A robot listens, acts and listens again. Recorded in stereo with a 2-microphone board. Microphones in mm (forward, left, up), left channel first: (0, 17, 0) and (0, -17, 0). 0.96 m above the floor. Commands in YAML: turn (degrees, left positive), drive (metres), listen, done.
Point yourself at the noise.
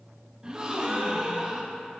turn: -20
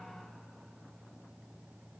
listen: true
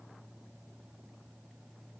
done: "I heard a gasp, but can't make it out now. It was about straight ahead or 140° right."